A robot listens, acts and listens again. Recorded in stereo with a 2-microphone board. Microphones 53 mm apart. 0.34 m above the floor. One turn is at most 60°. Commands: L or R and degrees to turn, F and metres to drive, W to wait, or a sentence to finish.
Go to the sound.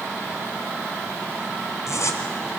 L60
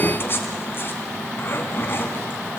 L45
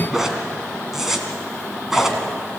R10
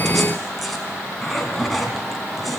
F1.0
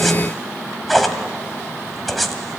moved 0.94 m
F1.0
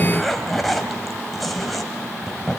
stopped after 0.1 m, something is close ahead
I am next to the zipper.